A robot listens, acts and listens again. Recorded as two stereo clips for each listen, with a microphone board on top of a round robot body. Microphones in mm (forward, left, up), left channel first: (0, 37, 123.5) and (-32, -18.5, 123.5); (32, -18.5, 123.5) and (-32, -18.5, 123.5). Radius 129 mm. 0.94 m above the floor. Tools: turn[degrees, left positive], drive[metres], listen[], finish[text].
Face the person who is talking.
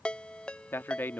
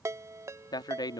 Action: finish[Facing the man speaking.]